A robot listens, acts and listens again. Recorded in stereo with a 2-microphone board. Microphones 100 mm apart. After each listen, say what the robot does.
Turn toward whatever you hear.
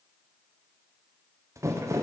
Turn 30° right.
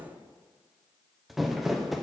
Found it: crumpling, straight ahead.